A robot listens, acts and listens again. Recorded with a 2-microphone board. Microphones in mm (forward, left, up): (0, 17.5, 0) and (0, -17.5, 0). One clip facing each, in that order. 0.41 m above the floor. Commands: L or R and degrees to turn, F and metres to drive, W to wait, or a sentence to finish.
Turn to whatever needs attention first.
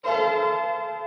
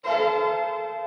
W
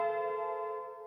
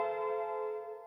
W
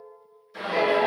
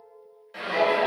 R60
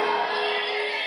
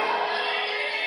R40
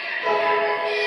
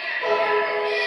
Facing the shout.